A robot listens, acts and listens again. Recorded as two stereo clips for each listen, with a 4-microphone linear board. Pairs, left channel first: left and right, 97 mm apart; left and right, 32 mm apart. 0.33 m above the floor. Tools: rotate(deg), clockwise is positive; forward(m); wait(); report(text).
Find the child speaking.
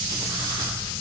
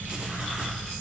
wait()
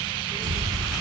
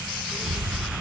rotate(90)
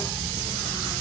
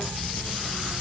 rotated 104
rotate(-15)
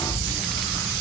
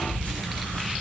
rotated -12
report("Facing the child speaking.")